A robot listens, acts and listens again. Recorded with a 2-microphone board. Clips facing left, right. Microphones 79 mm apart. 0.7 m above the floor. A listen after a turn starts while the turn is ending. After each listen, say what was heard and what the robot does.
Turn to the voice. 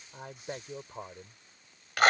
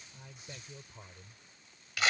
The man speaking: about 50° left or 130° left. Turn 50° left.
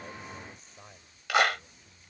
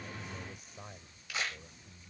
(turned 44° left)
So it is at 15° right. Turn 15° right.
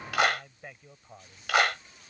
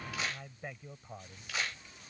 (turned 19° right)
Found it: a man speaking, straight ahead.